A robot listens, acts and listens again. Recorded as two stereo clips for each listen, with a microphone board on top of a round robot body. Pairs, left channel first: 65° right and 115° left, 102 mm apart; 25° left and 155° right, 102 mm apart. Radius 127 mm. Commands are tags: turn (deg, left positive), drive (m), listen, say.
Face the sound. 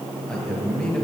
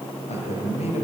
<turn deg="15"/>
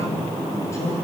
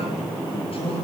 <say>Found it: a man speaking, straight ahead.</say>